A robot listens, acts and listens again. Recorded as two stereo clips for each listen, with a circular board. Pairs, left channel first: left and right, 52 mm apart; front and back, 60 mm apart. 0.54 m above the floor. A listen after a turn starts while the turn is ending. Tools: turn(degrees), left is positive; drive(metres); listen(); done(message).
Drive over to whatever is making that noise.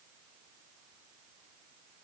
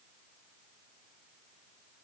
listen()
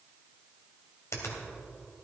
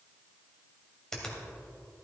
turn(degrees=80)
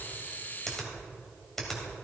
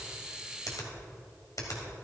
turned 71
drive(metres=1.0)
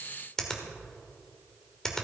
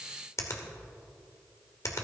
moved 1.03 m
turn(degrees=15)
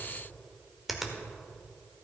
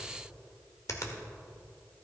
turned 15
drive(metres=1.0)
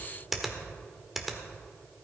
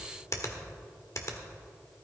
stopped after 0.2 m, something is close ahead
done("I am next to the finger snap.")